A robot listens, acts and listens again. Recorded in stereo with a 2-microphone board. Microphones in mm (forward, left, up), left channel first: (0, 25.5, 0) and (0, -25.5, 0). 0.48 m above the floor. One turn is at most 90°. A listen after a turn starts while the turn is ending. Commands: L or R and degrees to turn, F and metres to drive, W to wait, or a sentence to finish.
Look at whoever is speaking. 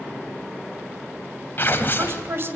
R55
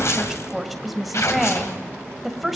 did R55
Found it: a woman speaking, straight ahead, 2 to 4 m away.